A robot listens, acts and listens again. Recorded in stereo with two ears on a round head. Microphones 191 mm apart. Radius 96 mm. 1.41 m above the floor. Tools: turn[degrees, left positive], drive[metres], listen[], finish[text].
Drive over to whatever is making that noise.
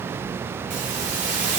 Thought: The hiss: about 40° right or 140° right.
Action: turn[-40]
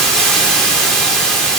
Action: drive[1.0]
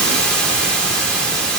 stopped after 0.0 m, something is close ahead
Action: finish[Blocked. The hiss is further on, straight ahead.]